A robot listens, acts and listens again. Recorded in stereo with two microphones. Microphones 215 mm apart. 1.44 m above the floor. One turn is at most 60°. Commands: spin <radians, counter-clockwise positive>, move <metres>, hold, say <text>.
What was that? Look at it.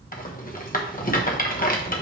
spin 0.79
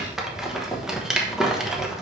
say Facing the rattle, 1 to 2 m away.